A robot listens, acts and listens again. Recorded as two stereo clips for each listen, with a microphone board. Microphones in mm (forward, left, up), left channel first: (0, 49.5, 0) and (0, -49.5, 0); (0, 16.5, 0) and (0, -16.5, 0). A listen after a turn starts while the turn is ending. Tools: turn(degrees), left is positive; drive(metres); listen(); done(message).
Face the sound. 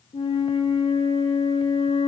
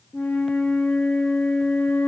turn(degrees=75)
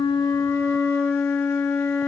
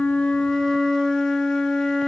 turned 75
turn(degrees=25)
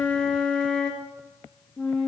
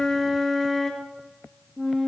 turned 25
turn(degrees=10)
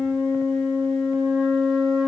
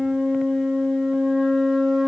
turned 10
done("Found it: a flute, straight ahead.")